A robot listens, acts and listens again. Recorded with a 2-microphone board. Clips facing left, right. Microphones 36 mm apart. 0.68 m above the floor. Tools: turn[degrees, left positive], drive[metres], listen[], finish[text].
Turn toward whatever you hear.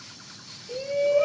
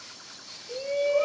Action: turn[-30]
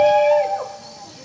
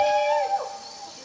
Thought: So it is at 20° left.
Action: turn[20]
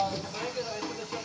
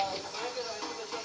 Action: finish[Found it: a shout, straight ahead, 1 to 2 m away.]